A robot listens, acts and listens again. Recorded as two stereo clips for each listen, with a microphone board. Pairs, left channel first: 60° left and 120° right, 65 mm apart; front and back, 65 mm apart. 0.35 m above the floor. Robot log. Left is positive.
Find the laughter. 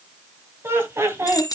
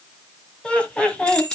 note: The laughter: 75° right.
cmd yaw -75
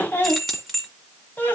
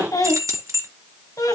end: Facing the laughter, 1 to 2 m away.